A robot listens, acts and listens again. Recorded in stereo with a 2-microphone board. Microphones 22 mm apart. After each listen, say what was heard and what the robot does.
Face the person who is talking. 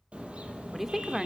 Turn 30° right.
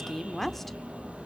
So it is at 10° left. Turn 10° left.
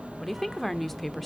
Facing the woman speaking, 1 to 2 m away.